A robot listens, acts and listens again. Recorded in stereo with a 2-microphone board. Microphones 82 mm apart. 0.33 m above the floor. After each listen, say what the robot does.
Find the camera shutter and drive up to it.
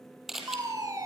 Turn 30° right.
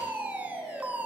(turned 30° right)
Keep listening.
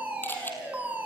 Keep listening.
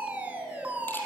I heard a camera shutter, but can't make it out now. It was about 25° left or 145° right. I did not reach it.